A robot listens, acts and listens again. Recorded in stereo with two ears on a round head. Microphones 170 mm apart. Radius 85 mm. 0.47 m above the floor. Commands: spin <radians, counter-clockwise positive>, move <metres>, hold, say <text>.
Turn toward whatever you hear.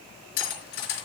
spin 0.96
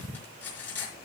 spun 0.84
spin 0.17
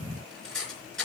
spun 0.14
say Facing the cutlery clinking, 2 to 4 m away.